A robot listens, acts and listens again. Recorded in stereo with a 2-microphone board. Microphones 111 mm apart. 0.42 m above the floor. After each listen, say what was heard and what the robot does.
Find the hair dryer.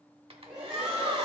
The hair dryer: about 55° right or 125° right. Turn 55° right.
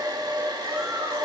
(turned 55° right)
So it is at 45° right. Turn 45° right.
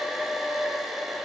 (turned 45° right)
Found it: a hair dryer, straight ahead, 1 to 2 m away.